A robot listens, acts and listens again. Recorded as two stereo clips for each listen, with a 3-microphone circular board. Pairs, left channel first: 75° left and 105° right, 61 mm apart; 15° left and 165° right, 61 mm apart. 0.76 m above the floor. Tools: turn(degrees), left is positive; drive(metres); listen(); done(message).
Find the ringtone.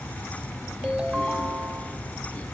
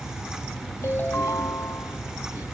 turn(degrees=-40)
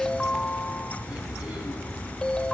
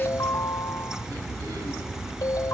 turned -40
done("Facing the ringtone.")